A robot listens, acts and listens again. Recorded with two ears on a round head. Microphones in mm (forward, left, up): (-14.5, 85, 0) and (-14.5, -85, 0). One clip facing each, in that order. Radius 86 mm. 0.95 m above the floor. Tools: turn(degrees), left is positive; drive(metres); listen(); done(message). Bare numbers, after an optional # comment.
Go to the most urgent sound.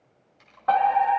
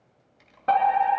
# The fire alarm: about 30° right or 150° right.
turn(-30)
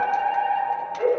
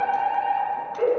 # So it is at 115° right.
turn(-115)
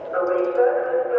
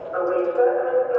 # The fire alarm is now 20° left.
turn(20)
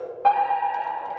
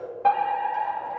drive(1.0)
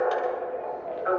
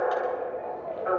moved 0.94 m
drive(1.0)
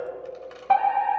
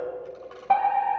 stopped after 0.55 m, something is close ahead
done("I am next to the fire alarm.")